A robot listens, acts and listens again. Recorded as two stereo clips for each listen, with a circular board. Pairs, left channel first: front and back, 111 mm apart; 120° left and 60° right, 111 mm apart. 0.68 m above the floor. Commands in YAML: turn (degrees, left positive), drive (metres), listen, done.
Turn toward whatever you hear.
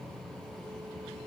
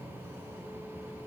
listen: true
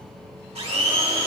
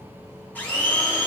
turn: -165
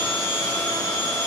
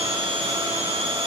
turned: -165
turn: -45
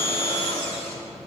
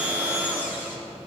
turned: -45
turn: 15
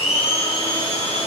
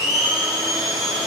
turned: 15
done: "Facing the blender."